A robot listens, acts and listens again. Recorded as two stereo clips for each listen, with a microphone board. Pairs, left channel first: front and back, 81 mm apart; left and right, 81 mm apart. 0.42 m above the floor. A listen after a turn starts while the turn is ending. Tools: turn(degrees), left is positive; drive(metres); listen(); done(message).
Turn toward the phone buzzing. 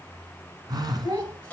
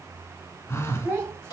turn(degrees=145)
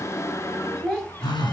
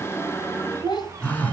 turn(degrees=20)
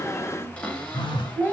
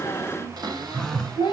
done("Found it: a phone buzzing, straight ahead.")